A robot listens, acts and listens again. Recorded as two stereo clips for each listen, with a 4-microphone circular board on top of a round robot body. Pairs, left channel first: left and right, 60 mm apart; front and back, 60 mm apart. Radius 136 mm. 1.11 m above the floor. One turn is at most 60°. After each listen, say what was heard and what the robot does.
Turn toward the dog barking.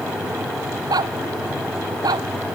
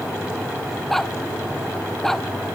The dog barking: 80° right. Turn 60° right.
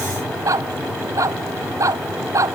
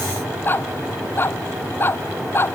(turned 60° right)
The dog barking is now 50° right. Turn 50° right.
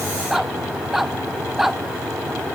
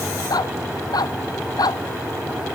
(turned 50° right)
Found it: a dog barking, straight ahead.